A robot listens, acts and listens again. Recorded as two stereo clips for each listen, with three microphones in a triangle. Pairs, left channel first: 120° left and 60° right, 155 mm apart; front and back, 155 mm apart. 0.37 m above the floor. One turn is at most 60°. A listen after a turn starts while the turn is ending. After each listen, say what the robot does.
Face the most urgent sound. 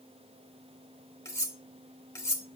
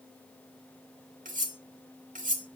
Keep listening.
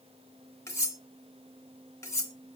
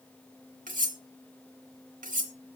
Keep listening.
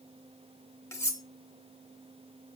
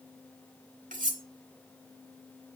I can't make out anything urgent to turn to.